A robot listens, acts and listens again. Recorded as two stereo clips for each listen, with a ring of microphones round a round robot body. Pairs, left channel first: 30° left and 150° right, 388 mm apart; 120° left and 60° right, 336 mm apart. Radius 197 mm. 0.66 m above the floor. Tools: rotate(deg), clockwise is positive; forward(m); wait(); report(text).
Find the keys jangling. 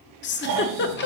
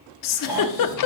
wait()
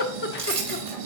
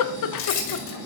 rotate(-135)
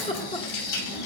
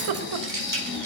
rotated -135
report("Facing the keys jangling.")